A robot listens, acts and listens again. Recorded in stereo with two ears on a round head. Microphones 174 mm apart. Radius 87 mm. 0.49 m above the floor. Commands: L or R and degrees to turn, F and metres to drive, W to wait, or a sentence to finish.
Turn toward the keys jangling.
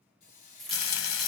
L30
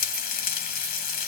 W
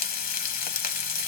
W
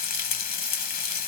I heard keys jangling, but can't make it out now. It was about 30° right or 150° left.